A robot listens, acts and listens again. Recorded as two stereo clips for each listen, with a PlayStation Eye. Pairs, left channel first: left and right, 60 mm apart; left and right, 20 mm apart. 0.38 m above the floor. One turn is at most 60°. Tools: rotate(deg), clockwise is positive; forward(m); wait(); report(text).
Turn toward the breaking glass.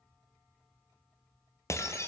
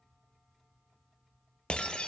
rotate(-55)
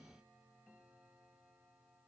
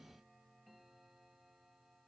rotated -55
wait()
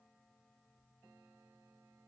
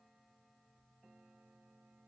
report("I heard breaking glass, but can't make it out now. It was about straight ahead or 70° left.")